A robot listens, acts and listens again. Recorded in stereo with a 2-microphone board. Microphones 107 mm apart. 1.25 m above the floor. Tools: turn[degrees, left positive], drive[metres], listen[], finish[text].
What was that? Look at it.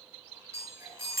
Thought: The chime: about 25° right or 155° right.
Action: turn[-25]
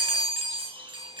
Thought: So it is at 130° right.
Action: turn[-130]
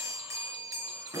Thought: The chime is now 25° right.
Action: turn[-25]
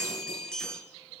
Action: finish[Found it: a chime, straight ahead.]